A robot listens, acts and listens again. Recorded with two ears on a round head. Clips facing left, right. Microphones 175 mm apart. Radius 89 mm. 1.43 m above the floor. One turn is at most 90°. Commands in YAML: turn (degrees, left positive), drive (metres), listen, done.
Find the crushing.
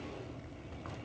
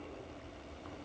listen: true
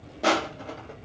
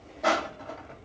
turn: 40
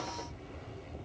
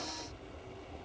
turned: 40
listen: true
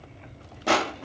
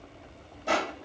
turn: 90
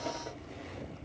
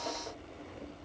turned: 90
turn: 15
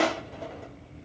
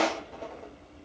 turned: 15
done: "Found it: crushing, straight ahead, under 1 m away."